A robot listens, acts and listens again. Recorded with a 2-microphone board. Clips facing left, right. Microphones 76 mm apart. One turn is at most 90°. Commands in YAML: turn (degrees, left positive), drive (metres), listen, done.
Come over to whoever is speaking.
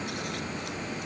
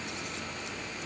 listen: true
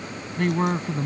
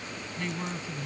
turn: 55
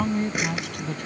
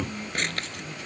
turn: 65
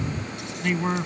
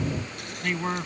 drive: 1.0
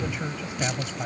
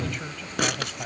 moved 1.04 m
turn: 15
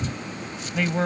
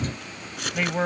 drive: 1.0
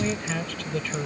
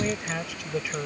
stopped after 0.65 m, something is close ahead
turn: -15
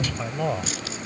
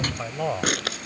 done: "Arrived at the man speaking, straight ahead."